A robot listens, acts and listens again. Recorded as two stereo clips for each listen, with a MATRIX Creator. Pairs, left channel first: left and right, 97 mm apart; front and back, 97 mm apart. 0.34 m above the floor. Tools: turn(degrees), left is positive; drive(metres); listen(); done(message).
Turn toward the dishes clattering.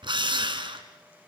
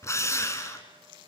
listen()
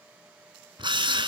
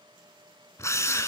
listen()
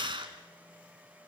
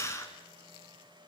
done("I can't make out dishes clattering to turn to.")